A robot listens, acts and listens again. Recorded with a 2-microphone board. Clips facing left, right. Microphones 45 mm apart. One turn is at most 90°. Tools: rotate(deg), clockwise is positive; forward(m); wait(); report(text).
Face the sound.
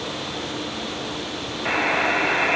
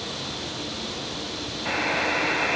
rotate(-45)
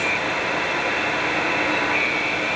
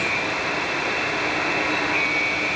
report("Facing the buzzer, 2 to 4 m away.")